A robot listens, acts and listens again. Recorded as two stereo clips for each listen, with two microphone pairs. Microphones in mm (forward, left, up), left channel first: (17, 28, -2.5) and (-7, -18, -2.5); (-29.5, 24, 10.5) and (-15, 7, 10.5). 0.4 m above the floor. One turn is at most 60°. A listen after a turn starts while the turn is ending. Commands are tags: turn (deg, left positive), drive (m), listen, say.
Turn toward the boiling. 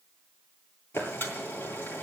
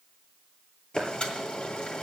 <turn deg="60"/>
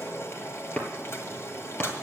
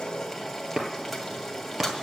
<turn deg="40"/>
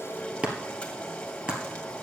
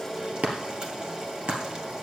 <say>Facing the boiling.</say>